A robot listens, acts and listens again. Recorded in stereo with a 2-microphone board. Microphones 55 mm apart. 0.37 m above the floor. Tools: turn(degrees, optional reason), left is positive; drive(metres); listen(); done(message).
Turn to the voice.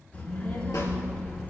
turn(degrees=30, reason="The child speaking: about 30° left or 150° left.")
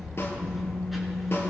done("Facing the child speaking.")